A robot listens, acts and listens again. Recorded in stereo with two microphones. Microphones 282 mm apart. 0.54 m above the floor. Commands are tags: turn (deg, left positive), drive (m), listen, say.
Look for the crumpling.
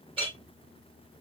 <listen/>
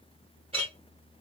<listen/>
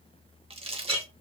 <turn deg="-20"/>
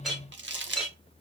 <turn deg="-140"/>
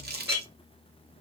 <turn deg="-35"/>
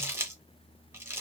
<turn deg="-10"/>
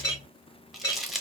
<say>Found it: crumpling, straight ahead.</say>